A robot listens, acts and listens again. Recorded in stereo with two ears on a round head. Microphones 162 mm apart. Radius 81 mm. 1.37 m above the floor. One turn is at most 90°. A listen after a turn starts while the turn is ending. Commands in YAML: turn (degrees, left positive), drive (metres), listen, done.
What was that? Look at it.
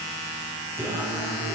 turn: -20
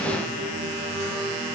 turn: -90
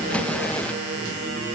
turn: -50
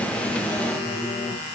turn: 10
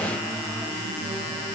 done: "Found it: singing, straight ahead."